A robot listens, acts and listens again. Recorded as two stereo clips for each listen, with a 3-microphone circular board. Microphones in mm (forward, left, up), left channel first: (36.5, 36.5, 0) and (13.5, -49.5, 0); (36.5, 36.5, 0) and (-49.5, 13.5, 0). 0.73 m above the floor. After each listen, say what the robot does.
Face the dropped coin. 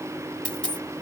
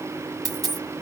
Turn 150° left.
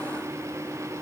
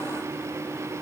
Facing where the dropped coin came from. I can't hear it now.